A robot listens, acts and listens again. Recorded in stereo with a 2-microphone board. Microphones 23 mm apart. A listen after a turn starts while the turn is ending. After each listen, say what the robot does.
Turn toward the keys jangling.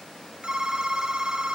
Keep listening.
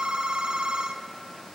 Keep listening.
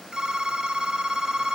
I can't make out keys jangling to turn to.